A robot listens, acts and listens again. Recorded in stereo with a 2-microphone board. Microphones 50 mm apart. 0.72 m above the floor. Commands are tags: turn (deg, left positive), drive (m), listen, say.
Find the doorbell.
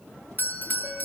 <turn deg="40"/>
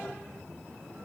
<listen/>
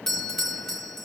<turn deg="10"/>
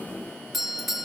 <say>Facing the doorbell, 1 to 2 m away.</say>